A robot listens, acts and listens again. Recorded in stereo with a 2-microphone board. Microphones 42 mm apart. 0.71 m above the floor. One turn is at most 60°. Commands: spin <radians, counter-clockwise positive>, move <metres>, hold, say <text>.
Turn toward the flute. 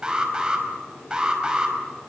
hold
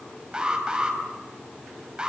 hold
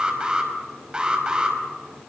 say I can't make out a flute to turn to.